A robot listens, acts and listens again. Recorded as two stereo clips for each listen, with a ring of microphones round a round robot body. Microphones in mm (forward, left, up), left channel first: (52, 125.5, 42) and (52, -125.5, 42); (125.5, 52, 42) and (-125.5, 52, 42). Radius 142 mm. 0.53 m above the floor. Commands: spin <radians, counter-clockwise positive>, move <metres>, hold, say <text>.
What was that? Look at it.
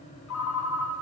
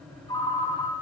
spin 1.31
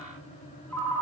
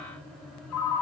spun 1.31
say Facing the ringtone.